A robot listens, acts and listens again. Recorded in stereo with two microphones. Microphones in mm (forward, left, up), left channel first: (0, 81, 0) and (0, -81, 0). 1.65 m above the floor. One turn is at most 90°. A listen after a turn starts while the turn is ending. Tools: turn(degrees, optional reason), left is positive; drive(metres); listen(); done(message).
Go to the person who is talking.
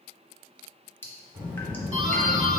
turn(degrees=-30)
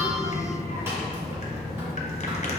turn(degrees=-90, reason="So it is at 140° right.")
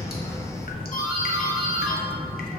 turn(degrees=-70, reason="The child speaking is now 70° right.")
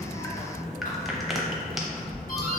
drive(metres=1.0)
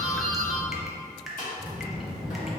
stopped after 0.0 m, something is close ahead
done("Something is in my way. I am facing the child speaking but have not reached it.")